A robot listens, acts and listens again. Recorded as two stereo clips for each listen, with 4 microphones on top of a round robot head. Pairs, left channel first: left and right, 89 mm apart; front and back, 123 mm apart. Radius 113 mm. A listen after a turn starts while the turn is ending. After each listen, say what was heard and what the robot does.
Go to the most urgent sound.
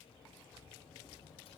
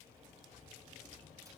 Keep listening.
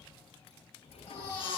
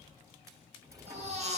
The baby crying: 155° left. Turn 155° left.
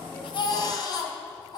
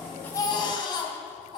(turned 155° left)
The baby crying is now 55° left. Turn 55° left.
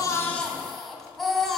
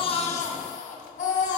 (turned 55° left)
Drive 1.0 m forward.
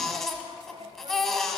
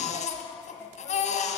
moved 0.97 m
Drive 1.0 m forward.
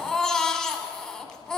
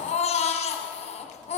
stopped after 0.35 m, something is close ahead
The baby crying is now 10° left. Turn 10° left.
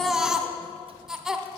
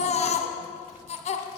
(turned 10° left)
I am next to the baby crying.